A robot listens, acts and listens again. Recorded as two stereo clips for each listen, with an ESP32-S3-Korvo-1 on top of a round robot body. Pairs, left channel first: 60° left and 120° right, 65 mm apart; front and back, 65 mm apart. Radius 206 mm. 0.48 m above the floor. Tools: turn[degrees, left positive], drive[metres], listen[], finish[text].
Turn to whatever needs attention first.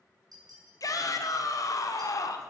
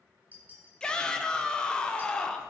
Thought: The shout: 75° left.
Action: turn[75]
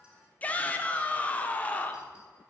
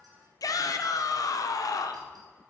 Action: finish[Found it: a shout, straight ahead, 1 to 2 m away.]